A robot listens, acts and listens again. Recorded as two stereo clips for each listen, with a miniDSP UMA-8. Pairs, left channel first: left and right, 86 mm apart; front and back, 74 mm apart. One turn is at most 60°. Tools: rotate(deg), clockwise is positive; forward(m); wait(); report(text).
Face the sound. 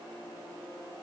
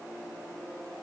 wait()
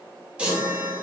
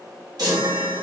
rotate(60)
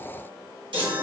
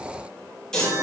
rotate(60)
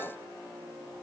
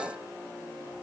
rotate(20)
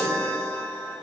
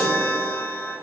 rotate(-10)
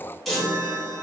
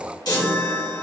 report("Found it: a chime, straight ahead, 1 to 2 m away.")